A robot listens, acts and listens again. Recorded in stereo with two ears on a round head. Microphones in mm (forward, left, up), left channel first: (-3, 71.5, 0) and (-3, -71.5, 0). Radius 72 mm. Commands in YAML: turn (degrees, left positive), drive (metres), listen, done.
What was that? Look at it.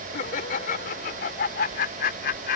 turn: 60
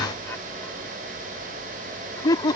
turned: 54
turn: 25
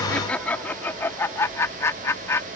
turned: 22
turn: 15
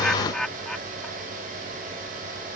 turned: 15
done: "Facing the laughter."